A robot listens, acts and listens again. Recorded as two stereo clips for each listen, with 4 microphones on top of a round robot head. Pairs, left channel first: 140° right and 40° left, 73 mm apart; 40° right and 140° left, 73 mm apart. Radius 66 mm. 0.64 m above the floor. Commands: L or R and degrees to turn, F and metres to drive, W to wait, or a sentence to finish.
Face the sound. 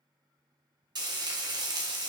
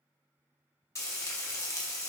L15
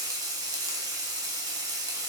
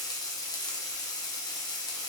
Facing the frying, 1 to 2 m away.